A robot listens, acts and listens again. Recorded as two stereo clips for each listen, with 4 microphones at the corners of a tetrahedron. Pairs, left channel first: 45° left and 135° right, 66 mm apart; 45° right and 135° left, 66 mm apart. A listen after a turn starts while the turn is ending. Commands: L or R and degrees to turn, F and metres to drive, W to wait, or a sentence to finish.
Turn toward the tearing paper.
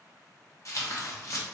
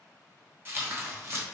L85
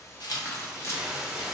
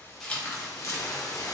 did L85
Facing the tearing paper.